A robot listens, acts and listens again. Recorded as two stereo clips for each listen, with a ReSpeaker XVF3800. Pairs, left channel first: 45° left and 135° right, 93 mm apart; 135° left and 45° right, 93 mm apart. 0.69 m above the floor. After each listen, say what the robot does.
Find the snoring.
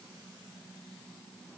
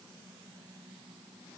Keep listening.
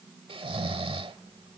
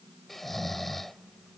Turn 135° right.
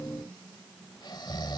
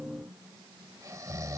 Turn 10° left.
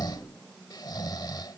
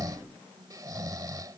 Found it: snoring, straight ahead.